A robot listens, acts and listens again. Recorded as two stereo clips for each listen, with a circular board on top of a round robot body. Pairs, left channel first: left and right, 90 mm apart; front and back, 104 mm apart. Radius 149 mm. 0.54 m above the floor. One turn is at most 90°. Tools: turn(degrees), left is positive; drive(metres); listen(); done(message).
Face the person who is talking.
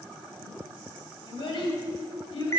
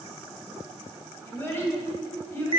turn(degrees=70)
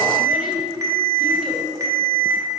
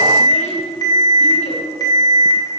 listen()
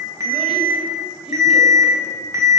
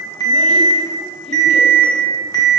listen()
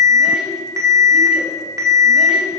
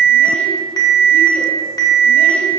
done("Facing where the child speaking came from. I can't hear it now.")